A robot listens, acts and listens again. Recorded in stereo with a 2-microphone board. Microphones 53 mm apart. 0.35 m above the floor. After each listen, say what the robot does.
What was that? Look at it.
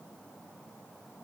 Keep listening.
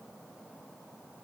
Keep listening.
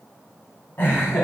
Turn 40° left.
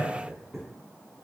Facing the laughter, 2 to 4 m away.